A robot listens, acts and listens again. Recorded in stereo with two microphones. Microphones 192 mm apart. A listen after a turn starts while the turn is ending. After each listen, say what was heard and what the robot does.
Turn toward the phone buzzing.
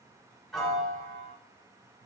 Keep listening.
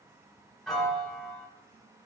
Keep listening.
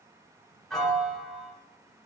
I can't make out a phone buzzing to turn to.